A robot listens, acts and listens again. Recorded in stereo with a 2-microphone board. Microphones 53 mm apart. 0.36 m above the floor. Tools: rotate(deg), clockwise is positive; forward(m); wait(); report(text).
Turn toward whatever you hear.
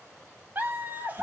rotate(40)
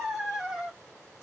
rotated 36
rotate(15)
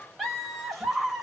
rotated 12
rotate(10)
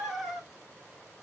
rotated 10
report("Found it: laughter, straight ahead.")